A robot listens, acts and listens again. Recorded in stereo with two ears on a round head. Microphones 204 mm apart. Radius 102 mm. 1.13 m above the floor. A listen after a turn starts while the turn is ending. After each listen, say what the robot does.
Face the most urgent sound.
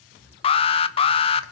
Turn 25° left.
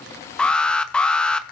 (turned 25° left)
Found it: an alarm, straight ahead.